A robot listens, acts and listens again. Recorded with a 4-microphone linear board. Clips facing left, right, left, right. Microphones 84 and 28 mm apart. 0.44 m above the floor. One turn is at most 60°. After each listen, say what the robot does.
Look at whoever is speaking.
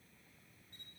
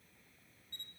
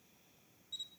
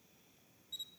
Keep listening.
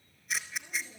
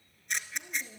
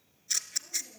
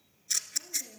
Turn 60° right.
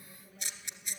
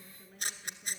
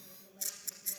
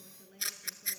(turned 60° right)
Turn 45° right.
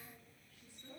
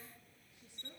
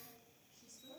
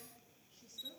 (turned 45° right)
Turn 20° right.
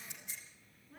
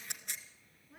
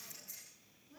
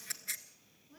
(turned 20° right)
Facing the woman speaking, over 4 m away.